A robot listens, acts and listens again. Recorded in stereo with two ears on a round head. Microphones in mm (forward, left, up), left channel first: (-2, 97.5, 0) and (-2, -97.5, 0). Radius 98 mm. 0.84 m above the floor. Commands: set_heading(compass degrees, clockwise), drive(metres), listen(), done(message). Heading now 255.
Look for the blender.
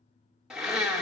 set_heading(285)
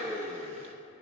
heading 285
set_heading(75)
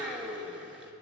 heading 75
done("Facing the blender, under 1 m away.")